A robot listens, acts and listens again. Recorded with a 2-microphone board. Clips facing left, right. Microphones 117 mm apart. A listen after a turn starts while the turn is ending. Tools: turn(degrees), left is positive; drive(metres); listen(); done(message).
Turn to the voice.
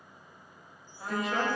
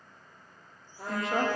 turn(degrees=-30)
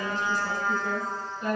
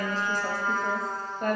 turn(degrees=-120)
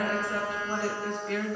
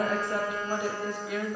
turn(degrees=-10)
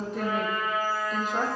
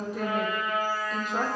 done("Found it: a woman speaking, straight ahead.")